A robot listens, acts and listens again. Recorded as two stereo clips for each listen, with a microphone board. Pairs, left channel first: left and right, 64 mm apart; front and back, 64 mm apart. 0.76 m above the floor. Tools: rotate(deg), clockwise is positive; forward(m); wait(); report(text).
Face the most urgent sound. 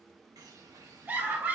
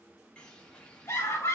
rotate(30)
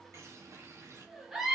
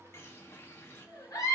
report("Found it: a scream, straight ahead.")